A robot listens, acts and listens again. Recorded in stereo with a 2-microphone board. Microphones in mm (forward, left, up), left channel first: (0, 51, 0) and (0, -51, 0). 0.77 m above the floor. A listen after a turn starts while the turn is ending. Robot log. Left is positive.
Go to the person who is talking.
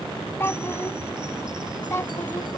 note: The child speaking: about 25° left or 155° left.
cmd yaw +25
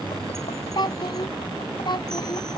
note: So it is at 135° left.
cmd yaw +135
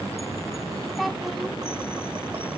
cmd fwd 1.0
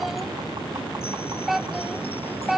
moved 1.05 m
cmd fwd 1.0
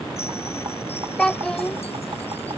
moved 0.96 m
note: The child speaking is now 10° left.
cmd yaw +10
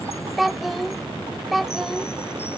cmd fwd 1.0
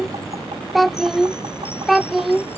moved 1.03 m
cmd fwd 1.0
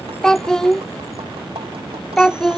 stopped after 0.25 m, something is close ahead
end: I am next to the child speaking.